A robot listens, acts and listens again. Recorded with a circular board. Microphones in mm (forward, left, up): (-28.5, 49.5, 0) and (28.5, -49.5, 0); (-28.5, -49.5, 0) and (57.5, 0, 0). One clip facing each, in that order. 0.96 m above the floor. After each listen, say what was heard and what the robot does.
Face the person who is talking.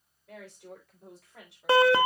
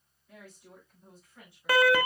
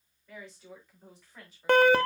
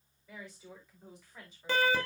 The woman speaking: 125° left. Turn 125° left.
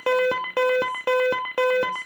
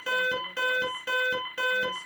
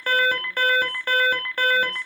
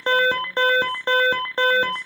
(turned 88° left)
Nothing new. It was at 35° left. Turn 35° left.
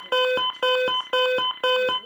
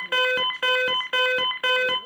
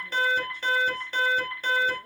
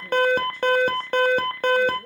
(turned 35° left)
Keep listening.
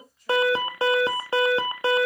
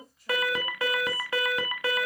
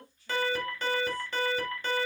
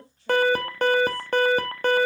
The woman speaking is now 30° left. Turn 30° left.
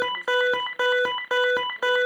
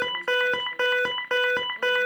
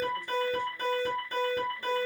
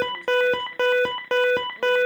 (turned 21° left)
Keep listening.
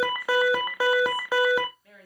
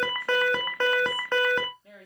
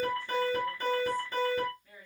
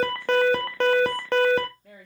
Found it: a woman speaking, straight ahead.